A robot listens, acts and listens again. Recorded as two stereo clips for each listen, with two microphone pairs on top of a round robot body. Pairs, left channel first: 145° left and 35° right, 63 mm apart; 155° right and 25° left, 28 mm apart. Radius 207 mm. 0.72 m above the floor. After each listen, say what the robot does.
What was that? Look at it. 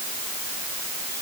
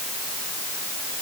Keep listening.
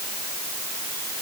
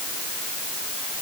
Keep listening.
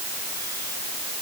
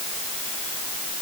I can't make out anything to turn to.